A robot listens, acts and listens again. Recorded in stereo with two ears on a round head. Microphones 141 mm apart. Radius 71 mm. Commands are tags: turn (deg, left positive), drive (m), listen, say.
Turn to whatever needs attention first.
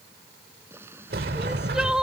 <turn deg="-30"/>
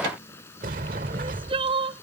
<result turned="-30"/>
<turn deg="-145"/>
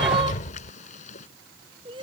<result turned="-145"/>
<turn deg="-30"/>
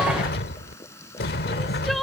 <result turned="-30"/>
<listen/>
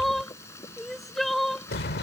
<say>Found it: crying, straight ahead.</say>